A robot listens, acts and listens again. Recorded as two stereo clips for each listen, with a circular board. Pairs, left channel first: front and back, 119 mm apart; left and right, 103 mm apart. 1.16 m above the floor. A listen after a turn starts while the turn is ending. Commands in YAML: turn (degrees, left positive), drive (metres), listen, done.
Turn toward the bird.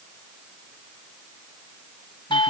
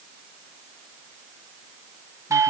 listen: true
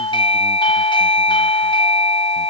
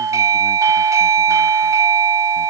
listen: true
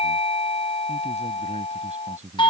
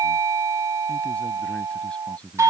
done: "I can't make out a bird to turn to."